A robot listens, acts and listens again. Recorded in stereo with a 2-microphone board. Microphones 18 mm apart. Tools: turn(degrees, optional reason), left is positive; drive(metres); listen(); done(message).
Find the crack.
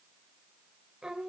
listen()
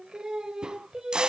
turn(degrees=-50, reason="The crack: about 50° right or 130° right.")
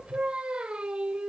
listen()
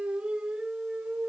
done("I heard a crack, but can't make it out now. It was about straight ahead or 80° right.")